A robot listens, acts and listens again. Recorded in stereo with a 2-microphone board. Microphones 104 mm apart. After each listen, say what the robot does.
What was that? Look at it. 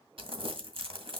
Turn 60° right.
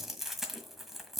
Facing the crumpling, 1 to 2 m away.